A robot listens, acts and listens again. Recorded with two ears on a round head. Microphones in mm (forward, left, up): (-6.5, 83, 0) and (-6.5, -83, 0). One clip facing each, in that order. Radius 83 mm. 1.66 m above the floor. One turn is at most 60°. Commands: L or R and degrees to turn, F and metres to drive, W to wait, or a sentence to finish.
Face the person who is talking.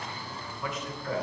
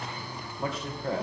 R25
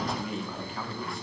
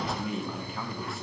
Found it: a man speaking, straight ahead, 1 to 2 m away.